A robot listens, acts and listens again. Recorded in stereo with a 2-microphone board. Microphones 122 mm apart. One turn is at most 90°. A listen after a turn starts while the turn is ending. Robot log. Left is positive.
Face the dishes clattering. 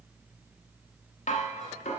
cmd yaw +90
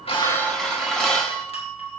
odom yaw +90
end: Facing the dishes clattering.